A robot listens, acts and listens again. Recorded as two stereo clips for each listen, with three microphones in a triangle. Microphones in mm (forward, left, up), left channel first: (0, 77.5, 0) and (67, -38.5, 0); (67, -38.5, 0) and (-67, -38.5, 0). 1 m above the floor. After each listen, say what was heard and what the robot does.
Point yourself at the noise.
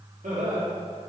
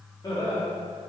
The laughter: 55° right. Turn 55° right.
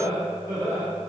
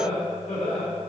The laughter is now 10° left. Turn 10° left.
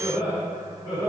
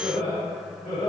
Found it: laughter, straight ahead, 2 to 4 m away.